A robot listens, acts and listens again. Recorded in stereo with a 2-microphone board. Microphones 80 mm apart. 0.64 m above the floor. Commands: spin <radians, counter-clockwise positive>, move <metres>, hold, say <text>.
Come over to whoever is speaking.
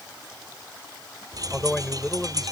spin 0.52
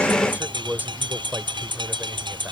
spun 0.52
spin -0.44
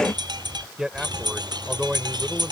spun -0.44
spin -0.17
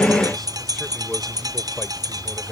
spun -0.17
hold
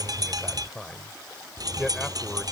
move 1.0
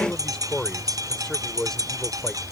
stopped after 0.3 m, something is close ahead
spin 0.17
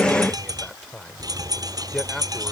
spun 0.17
say Blocked. The man speaking is further on, straight ahead.